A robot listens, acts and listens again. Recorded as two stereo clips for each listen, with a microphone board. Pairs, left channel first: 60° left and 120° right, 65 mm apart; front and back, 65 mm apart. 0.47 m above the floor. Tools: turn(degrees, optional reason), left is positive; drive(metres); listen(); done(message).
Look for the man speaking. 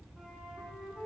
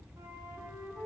listen()
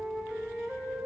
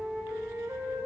listen()
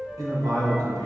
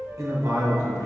turn(degrees=-145, reason="The man speaking: 145° right.")
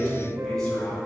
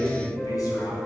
turn(degrees=-20, reason="The man speaking is now 20° right.")
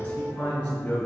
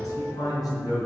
turn(degrees=-10, reason="The man speaking is now 10° right.")
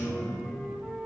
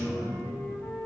done("Found it: a man speaking, straight ahead.")